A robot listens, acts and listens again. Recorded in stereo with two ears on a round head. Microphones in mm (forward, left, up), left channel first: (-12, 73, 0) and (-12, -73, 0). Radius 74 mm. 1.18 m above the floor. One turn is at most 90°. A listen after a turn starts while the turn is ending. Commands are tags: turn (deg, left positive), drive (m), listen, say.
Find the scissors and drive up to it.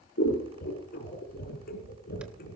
<turn deg="60"/>
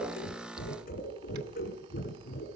<turn deg="55"/>
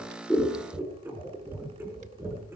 <turn deg="-10"/>
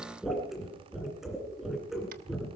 <drive m="1.0"/>
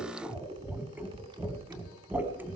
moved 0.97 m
<turn deg="-10"/>
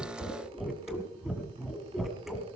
<drive m="1.0"/>
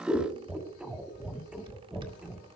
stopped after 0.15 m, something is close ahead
<say>I am next to the scissors.</say>